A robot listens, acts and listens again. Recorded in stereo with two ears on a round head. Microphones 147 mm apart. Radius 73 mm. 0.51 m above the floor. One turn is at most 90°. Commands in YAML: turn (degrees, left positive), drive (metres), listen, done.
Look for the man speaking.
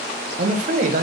turn: -55
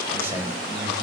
turn: -15
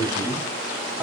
done: "Found it: a man speaking, straight ahead."